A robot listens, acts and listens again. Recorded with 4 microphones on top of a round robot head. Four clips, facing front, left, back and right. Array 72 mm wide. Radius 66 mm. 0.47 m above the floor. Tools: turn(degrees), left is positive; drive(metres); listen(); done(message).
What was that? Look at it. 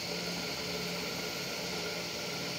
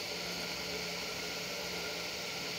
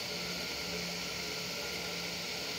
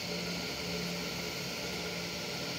listen()
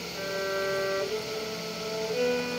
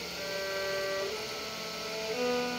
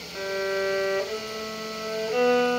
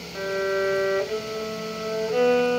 turn(degrees=-135)
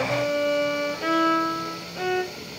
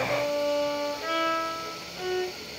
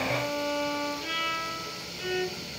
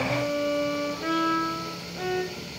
done("Facing the violin, 1 to 2 m away.")